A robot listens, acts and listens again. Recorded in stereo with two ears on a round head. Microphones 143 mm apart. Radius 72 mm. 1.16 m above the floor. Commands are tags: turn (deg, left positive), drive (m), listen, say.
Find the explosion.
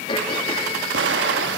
<turn deg="-90"/>
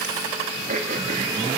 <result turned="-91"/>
<say>Facing where the explosion came from. I can't hear it now.</say>